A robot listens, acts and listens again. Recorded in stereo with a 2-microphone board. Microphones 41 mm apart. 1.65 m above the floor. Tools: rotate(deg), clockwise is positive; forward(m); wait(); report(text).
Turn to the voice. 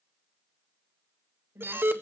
rotate(65)
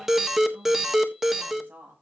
rotate(50)
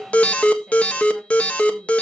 wait()
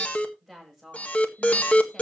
report("Facing the woman speaking, over 4 m away.")